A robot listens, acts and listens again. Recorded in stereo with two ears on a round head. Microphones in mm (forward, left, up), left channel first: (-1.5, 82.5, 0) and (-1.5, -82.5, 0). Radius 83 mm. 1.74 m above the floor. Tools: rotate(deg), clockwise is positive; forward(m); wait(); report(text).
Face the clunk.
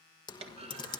rotate(35)
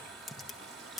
wait()
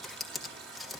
report("I heard a clunk, but can't make it out now. It was about straight ahead or 110° right.")